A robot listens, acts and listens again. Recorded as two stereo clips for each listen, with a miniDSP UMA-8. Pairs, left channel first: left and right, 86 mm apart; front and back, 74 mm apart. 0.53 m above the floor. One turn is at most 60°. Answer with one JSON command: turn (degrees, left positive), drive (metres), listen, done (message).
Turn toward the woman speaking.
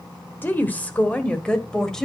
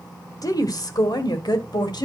{"done": "Facing the woman speaking."}